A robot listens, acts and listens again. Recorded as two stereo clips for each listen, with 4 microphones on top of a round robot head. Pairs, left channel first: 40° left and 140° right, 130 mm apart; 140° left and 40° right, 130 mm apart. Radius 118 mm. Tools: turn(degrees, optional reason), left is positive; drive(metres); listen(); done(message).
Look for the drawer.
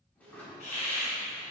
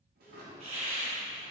turn(degrees=-40, reason="The drawer: 40° right.")
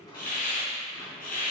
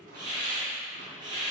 listen()
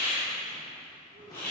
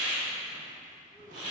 listen()
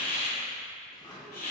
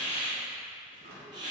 turn(degrees=-25, reason="The drawer is now 25° right.")
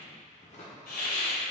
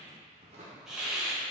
done("Facing the drawer.")